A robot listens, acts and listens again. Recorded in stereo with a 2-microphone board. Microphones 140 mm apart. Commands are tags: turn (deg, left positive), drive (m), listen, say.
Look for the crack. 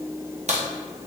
<turn deg="-50"/>
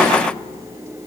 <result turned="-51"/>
<listen/>
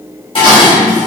<say>I heard a crack, but can't make it out now. It was about straight ahead or 75° right.</say>